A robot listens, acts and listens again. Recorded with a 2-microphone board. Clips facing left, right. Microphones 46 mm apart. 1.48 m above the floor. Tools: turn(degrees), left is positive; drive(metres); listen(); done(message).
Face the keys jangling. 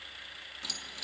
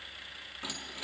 turn(degrees=-30)
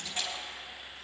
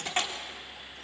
turn(degrees=-120)
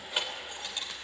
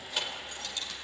turn(degrees=25)
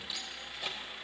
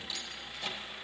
turn(degrees=10)
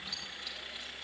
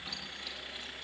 listen()
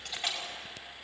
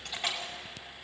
done("Facing the keys jangling.")